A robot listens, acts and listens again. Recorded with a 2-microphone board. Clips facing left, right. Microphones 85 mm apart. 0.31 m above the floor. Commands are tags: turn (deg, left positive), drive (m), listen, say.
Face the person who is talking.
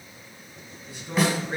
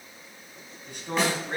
<turn deg="-60"/>
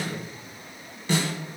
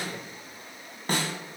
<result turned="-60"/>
<listen/>
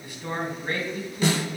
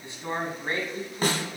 <turn deg="-30"/>
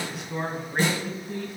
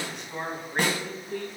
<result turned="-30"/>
<say>Facing the man speaking.</say>